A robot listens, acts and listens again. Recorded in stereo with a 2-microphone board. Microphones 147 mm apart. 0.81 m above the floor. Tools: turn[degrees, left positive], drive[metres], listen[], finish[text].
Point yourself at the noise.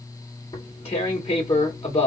Thought: The tearing paper: about 35° left or 145° left.
Action: turn[35]
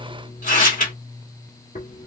Thought: So it is at 100° left.
Action: turn[100]
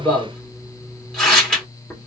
Action: finish[Facing the tearing paper.]